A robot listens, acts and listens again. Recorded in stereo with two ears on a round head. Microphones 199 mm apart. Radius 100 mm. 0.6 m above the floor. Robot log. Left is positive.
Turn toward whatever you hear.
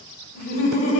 note: The laughter: about 40° left or 140° left.
cmd yaw +40
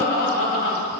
note: So it is at 115° left.
cmd yaw +115
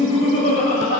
note: The laughter is now 35° left.
cmd yaw +35
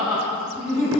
end: Found it: laughter, straight ahead, 2 to 4 m away.